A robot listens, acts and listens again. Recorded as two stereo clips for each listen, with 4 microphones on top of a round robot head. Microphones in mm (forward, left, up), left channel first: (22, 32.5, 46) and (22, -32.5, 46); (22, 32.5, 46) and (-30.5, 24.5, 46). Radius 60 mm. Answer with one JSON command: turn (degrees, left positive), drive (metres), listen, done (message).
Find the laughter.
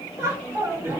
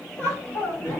{"turn": -35}
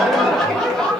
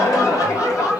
{"turn": 10}
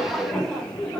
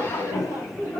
{"turn": 15}
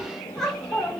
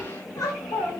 {"turn": 15}
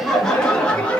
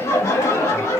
{"turn": 20}
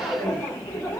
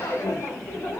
{"turn": 15}
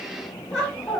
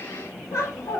{"done": "Facing the laughter."}